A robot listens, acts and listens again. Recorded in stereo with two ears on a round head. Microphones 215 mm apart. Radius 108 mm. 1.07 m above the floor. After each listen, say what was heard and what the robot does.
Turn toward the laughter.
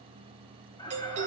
The laughter: about 20° left or 160° left. Turn 20° left.
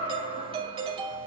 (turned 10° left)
The laughter: about 35° left or 145° left. Turn 35° left.
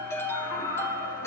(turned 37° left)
So it is at 100° left. Turn 100° left.
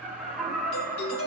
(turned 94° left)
Facing the laughter, over 4 m away.